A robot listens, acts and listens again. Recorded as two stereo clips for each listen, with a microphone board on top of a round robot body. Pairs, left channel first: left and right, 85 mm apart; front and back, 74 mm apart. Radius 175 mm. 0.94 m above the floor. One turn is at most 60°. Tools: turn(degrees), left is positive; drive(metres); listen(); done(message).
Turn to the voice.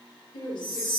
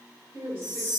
turn(degrees=60)
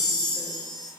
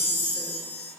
turn(degrees=60)
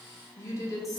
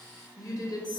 turn(degrees=35)
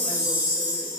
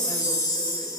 listen()
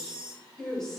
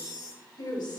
done("Found it: a woman speaking, straight ahead.")